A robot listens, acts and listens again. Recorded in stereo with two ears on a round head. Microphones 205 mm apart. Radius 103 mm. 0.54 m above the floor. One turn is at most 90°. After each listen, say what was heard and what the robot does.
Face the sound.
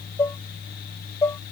Turn 30° left.
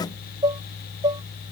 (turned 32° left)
So it is at 20° right. Turn 20° right.
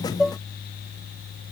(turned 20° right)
Found it: dishes clattering, straight ahead.